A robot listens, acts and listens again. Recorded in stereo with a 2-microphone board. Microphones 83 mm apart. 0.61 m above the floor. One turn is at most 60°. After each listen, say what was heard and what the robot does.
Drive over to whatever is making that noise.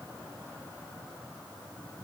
Keep listening.
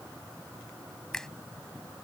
Turn 30° left.
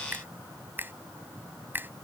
So it is at 25° right. Turn 25° right.
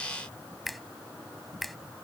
Drive 1.0 m forward.
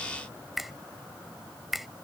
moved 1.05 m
Drive 1.0 m forward.
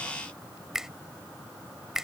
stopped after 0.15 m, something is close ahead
Something is in my way. I am facing the finger snap but have not reached it.